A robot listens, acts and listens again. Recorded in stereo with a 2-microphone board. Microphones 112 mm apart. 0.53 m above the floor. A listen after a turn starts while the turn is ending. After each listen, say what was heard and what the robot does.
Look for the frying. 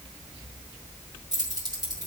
Keep listening.
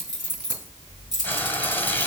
The frying: about 15° left or 165° left. Turn 15° left.
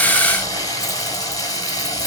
So it is at 145° left. Turn 145° left.
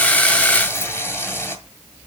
The frying is now 25° left. Turn 25° left.
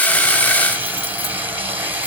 The frying is now 15° right. Turn 15° right.
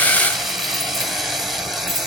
Facing the frying.